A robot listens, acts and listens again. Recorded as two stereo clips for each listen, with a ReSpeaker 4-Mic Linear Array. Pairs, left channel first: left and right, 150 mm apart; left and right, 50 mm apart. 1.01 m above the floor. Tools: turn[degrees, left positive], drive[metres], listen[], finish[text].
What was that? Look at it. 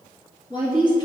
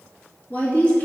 Thought: The woman speaking: about 30° left or 150° left.
Action: turn[30]
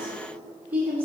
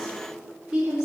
Thought: So it is at 15° right.
Action: turn[-15]
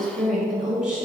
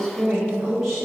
Action: finish[Facing the woman speaking, 2 to 4 m away.]